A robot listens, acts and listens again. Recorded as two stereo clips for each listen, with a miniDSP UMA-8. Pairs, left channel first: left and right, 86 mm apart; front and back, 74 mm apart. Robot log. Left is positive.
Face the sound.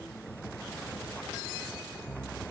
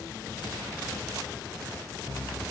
cmd idle
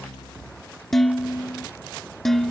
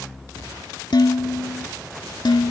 end: Facing the dishes clattering.